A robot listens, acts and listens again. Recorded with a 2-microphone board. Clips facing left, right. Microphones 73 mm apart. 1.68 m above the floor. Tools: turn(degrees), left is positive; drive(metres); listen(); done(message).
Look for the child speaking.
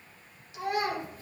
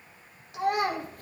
turn(degrees=-60)
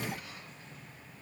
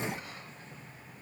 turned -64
listen()
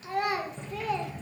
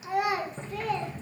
done("Found it: a child speaking, straight ahead.")